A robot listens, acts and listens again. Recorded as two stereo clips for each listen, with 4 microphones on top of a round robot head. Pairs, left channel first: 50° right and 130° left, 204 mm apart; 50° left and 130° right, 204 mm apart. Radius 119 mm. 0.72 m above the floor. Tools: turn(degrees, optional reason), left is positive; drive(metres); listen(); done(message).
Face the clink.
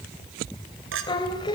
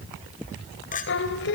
turn(degrees=105, reason="The clink: 105° left.")
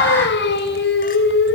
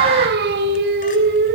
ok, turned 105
listen()
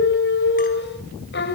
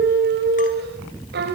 listen()
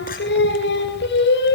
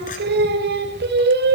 done("I heard a clink from this way, but can't make it out now.")